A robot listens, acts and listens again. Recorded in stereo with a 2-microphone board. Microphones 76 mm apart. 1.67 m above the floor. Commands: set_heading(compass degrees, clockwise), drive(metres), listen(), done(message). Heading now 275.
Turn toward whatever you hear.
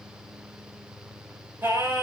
set_heading(305)
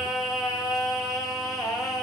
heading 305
done("Found it: singing, straight ahead.")